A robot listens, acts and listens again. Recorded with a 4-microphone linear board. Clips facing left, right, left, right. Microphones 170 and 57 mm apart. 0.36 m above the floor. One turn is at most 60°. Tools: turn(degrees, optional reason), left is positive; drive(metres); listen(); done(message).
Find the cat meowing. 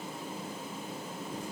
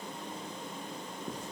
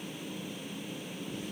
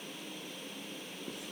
listen()
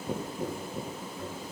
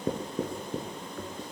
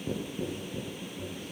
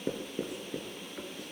listen()
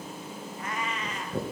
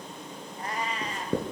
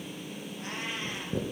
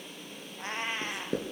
turn(degrees=-35, reason="The cat meowing: about 35° right or 145° right.")
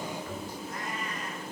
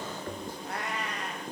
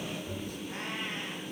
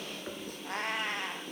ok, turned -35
turn(degrees=-60, reason="So it is at 110° right.")
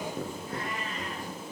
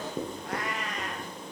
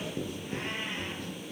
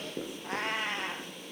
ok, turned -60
turn(degrees=-60, reason="The cat meowing is now 80° right.")
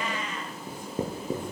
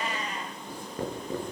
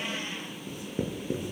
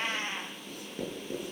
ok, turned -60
turn(degrees=-35, reason="The cat meowing is now 35° right.")
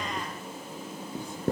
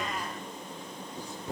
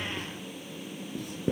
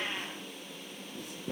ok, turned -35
listen()
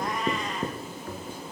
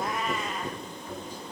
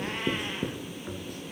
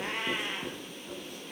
listen()
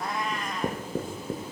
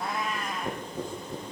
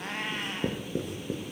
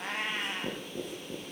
done("Facing the cat meowing.")